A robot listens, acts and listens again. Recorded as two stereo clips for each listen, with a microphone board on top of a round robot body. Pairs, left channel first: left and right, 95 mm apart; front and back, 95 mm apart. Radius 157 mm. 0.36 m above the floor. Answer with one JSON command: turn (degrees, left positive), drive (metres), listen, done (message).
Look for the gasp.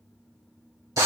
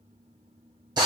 {"listen": true}
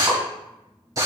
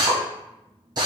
{"listen": true}
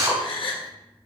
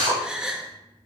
{"turn": 100}
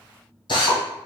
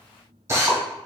{"done": "I heard a gasp from this way, but can't make it out now."}